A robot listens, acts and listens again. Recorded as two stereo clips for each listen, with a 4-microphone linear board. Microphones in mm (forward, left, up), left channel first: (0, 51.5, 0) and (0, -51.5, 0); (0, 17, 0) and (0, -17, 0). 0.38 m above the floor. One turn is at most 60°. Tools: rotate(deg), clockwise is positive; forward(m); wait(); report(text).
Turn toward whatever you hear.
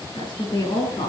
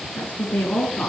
rotate(-50)
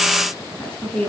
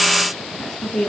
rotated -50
rotate(-15)
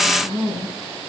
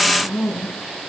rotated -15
report("Found it: a woman speaking, straight ahead.")